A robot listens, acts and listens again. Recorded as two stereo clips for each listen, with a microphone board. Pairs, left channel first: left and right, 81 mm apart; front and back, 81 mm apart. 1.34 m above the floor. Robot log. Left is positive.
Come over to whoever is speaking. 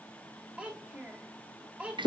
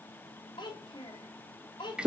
note: The child speaking: 15° right.
cmd yaw -15
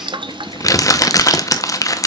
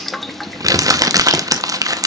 cmd idle
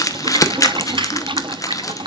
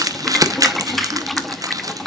cmd idle
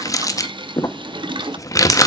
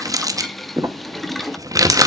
end: Facing where the child speaking came from. I can't hear it now. I did not reach it.